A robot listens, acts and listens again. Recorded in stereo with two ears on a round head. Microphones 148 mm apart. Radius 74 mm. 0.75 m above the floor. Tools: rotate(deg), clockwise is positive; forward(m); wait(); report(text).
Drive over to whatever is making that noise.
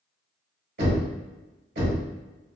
rotate(60)
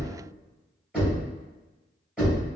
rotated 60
forward(1.0)
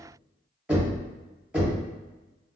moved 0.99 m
forward(1.0)
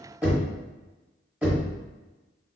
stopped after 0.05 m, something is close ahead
report("I am next to the knocking.")